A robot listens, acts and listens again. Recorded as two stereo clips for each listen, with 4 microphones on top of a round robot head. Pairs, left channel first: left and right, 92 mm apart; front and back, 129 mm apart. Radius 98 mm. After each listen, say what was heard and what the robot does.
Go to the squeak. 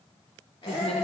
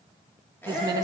The squeak: 75° left. Turn 75° left.
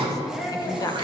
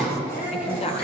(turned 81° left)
Nothing new. It was at 10° right. Turn 10° right.
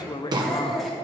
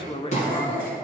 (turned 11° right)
Drive 1.0 m forward.
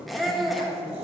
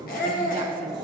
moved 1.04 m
Drive 1.0 m forward.
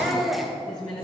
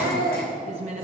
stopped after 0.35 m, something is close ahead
I am next to the squeak.